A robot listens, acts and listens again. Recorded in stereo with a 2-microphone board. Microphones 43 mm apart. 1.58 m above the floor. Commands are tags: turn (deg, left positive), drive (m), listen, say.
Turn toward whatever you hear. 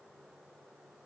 <listen/>
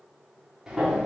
<turn deg="-15"/>
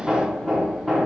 <say>Found it: hammering, straight ahead.</say>